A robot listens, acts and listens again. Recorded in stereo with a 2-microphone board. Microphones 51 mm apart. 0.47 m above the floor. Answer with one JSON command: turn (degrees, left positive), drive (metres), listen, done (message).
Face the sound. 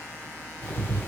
{"turn": 35}
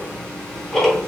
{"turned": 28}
{"turn": 10}
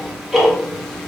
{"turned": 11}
{"done": "Found it: ticking, straight ahead, 1 to 2 m away."}